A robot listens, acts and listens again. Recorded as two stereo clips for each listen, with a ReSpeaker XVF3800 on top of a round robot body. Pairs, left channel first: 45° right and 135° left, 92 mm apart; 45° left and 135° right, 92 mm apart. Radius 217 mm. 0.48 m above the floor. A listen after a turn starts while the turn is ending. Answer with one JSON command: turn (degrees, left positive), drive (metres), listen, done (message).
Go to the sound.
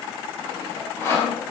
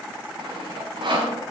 {"turn": -105}
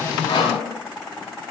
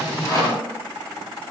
{"listen": true}
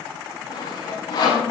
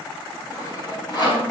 {"drive": 1.0}
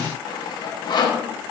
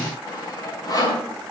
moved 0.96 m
{"drive": 1.0}
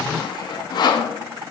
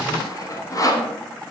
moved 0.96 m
{"drive": 1.0}
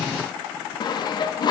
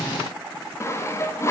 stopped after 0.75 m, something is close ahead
{"turn": -15}
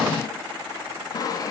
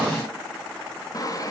{"done": "Arrived at the sawing, straight ahead."}